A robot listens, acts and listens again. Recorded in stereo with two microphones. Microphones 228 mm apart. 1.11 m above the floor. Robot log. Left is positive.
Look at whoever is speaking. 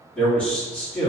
cmd yaw +30
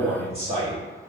note: So it is at 30° right.
cmd yaw -30
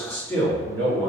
note: The man speaking is now 10° left.
cmd yaw +10
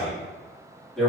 end: Facing the man speaking.